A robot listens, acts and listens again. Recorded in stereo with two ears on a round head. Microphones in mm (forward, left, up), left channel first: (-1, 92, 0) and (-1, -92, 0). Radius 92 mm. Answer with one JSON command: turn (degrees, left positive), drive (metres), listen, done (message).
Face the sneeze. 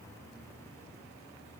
{"listen": true}
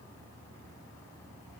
{"listen": true}
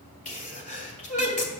{"turn": 35}
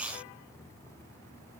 {"listen": true}
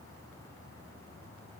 {"done": "I heard a sneeze, but can't make it out now. It was about straight ahead or 110° left."}